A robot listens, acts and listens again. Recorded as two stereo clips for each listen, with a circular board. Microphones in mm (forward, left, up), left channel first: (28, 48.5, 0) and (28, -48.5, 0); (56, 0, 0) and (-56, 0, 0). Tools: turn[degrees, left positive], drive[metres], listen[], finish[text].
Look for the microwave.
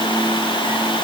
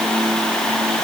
Action: listen[]
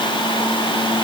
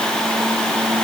Action: listen[]
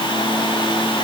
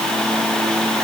Action: finish[I can't make out a microwave to turn to.]